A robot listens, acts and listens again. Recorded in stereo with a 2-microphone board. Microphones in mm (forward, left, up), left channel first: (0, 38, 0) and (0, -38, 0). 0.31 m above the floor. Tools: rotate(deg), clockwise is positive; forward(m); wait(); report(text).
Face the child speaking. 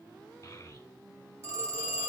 rotate(-50)
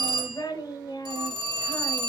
rotate(-65)
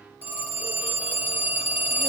wait()
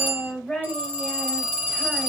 report("Found it: a child speaking, straight ahead, 1 to 2 m away.")